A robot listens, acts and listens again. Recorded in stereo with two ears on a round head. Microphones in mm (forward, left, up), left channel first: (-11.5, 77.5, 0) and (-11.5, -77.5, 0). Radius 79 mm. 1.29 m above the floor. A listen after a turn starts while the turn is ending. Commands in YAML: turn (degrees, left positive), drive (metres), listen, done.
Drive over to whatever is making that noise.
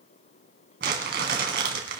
turn: -60
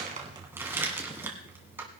turn: -15
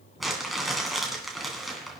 drive: 1.0
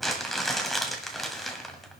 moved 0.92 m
drive: 1.0
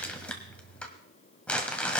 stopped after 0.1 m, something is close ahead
turn: 10
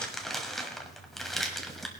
done: "Arrived at the crumpling, straight ahead."